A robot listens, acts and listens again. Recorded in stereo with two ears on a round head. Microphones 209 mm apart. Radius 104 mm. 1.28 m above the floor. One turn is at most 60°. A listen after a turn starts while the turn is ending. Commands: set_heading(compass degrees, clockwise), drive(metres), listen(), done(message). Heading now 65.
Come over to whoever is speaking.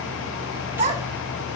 set_heading(95)
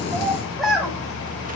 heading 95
drive(1.0)
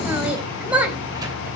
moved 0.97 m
drive(1.0)
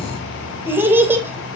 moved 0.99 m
set_heading(105)
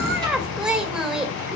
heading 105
drive(1.0)
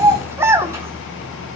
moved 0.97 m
set_heading(115)
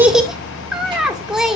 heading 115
drive(1.0)
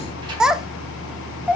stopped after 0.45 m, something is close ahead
done("I am next to the child speaking.")